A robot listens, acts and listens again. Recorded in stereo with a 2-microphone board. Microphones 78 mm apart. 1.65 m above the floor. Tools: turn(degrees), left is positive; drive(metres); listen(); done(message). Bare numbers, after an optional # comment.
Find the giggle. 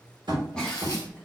turn(30)
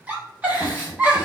# So it is at 20° right.
turn(-20)
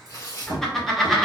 done("Found it: a giggle, straight ahead.")